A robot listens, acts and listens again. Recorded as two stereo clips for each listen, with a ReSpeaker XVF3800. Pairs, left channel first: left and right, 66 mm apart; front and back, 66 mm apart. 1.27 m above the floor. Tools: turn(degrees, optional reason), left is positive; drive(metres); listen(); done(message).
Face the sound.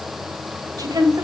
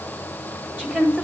turn(degrees=-110, reason="The woman speaking: 110° right.")
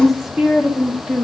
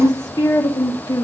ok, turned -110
turn(degrees=-10, reason="The woman speaking is now 10° right.")
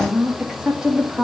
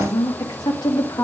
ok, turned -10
turn(degrees=-15, reason="The woman speaking is now 15° right.")
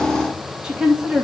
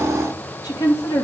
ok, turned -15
turn(degrees=-10, reason="The woman speaking is now 10° right.")
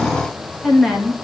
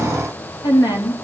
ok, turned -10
done("Found it: a woman speaking, straight ahead.")